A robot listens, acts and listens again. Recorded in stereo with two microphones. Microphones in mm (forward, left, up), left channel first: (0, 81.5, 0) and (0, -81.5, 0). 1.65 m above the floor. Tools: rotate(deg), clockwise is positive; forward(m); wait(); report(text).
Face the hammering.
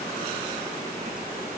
wait()
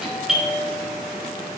wait()
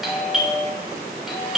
report("I can't make out hammering, only a doorbell.")